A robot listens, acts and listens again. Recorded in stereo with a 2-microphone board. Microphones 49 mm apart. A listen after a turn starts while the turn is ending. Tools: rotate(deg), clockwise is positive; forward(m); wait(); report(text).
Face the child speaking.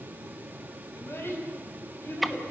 rotate(-55)
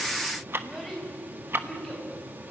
report("Facing the child speaking.")